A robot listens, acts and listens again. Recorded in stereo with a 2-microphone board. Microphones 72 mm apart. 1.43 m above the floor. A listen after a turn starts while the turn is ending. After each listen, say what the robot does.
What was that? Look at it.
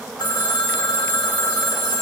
Turn 90° left.
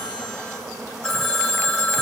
Facing the phone ringing, 2 to 4 m away.